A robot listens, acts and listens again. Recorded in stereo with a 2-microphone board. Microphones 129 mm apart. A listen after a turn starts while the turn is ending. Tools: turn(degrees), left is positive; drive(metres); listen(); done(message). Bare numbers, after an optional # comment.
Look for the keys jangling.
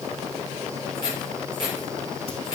# The keys jangling: about 30° left or 150° left.
turn(30)
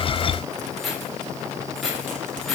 done("Found it: keys jangling, straight ahead.")